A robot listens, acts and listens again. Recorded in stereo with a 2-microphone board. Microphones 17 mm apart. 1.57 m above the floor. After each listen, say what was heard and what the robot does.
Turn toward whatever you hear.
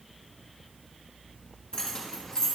The keys jangling: about 50° left or 130° left. Turn 50° left.
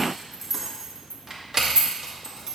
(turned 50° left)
So it is at 45° right. Turn 45° right.
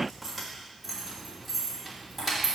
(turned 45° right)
The keys jangling is now 10° left. Turn 10° left.
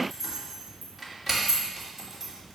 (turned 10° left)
Facing the keys jangling.